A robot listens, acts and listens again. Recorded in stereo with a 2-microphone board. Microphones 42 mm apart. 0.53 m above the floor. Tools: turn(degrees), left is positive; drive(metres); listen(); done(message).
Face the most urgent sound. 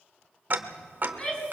turn(degrees=25)
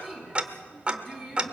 done("Found it: a shout, straight ahead.")